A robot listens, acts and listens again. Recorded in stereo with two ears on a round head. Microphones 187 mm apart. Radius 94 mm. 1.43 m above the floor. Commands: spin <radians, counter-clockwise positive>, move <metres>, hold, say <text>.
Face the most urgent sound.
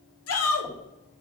spin 1.57
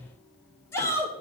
spin 0.17
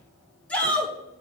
say Found it: a shout, straight ahead.